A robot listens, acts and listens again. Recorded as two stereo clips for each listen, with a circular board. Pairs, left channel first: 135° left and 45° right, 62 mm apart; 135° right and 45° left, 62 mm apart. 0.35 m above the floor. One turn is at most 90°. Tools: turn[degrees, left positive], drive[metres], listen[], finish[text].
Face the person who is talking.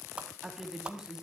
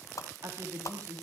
Thought: The woman speaking: 30° left.
Action: turn[30]
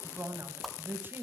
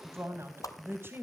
Action: finish[Found it: a woman speaking, straight ahead, 2 to 4 m away.]